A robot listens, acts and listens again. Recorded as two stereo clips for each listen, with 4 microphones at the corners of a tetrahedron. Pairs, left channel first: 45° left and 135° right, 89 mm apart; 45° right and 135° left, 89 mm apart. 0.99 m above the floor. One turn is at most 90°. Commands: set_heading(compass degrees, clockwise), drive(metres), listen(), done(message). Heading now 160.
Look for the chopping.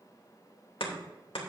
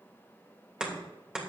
set_heading(105)
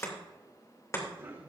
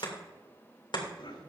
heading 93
set_heading(103)
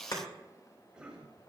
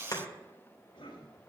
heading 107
done("Facing the chopping.")